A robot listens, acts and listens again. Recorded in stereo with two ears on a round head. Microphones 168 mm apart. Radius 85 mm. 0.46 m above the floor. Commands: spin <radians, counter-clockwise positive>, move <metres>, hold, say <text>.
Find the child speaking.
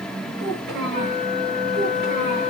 spin -1.05
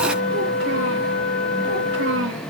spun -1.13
hold
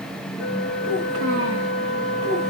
spin -1.13
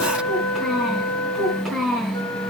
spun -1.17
say Facing the child speaking.